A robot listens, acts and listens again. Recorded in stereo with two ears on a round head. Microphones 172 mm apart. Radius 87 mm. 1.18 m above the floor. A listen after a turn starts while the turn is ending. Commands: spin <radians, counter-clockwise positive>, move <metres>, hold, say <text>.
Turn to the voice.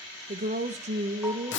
spin -0.70
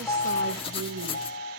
spin -1.75
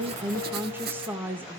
spin -0.17
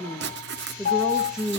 say Found it: a woman speaking, straight ahead, 1 to 2 m away.